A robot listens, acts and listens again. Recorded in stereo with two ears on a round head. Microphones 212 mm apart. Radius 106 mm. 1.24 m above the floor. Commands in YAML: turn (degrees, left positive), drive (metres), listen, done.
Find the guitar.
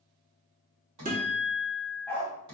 turn: -35
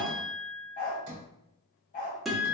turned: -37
done: "Found it: a guitar, straight ahead."